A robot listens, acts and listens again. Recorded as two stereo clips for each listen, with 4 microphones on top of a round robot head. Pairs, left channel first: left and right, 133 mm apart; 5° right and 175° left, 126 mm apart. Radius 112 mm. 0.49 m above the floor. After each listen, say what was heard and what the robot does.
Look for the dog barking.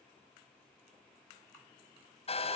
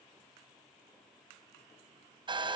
Keep listening.
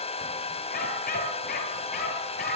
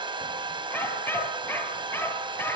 The dog barking: 70° left. Turn 70° left.
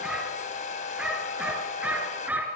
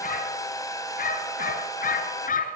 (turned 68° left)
The dog barking is now 10° right. Turn 10° right.
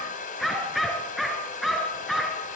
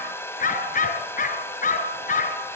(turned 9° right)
Facing the dog barking.